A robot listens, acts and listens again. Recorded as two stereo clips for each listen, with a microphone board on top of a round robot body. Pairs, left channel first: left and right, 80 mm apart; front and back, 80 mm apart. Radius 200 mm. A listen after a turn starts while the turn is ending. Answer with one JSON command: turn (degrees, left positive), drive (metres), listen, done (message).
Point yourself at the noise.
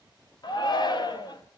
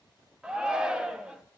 {"turn": 100}
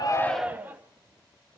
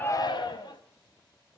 {"turn": -20}
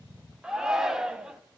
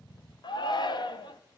{"turn": -10}
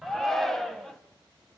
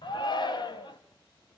{"done": "Found it: a shout, straight ahead."}